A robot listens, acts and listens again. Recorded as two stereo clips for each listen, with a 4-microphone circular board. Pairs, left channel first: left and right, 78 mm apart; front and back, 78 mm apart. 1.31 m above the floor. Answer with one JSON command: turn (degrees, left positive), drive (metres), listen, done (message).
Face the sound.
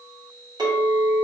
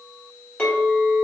{"turn": -70}
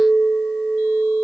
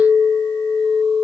{"turn": 15}
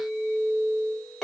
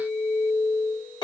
{"done": "Found it: a clink, straight ahead, 1 to 2 m away."}